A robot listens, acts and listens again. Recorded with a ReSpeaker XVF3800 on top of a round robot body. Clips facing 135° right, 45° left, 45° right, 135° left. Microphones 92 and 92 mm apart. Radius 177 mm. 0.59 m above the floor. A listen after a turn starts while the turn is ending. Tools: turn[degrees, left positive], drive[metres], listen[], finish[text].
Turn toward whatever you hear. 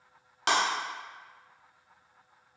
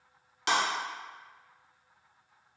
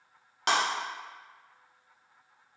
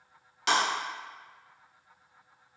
Thought: The breaking glass: 95° right.
Action: turn[-95]
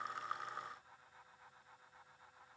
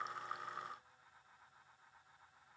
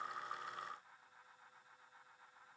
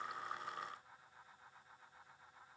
Action: finish[I heard breaking glass from this way, but can't make it out now.]